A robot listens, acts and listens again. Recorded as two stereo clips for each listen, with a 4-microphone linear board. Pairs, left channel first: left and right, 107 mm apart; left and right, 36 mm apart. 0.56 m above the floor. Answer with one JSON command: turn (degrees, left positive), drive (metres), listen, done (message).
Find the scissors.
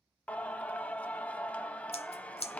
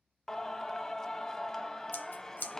{"turn": 70}
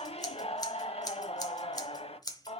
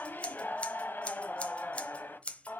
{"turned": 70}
{"turn": 40}
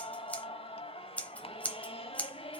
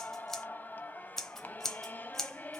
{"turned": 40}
{"turn": 15}
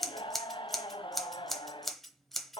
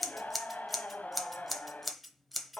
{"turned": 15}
{"done": "Found it: scissors, straight ahead, 1 to 2 m away."}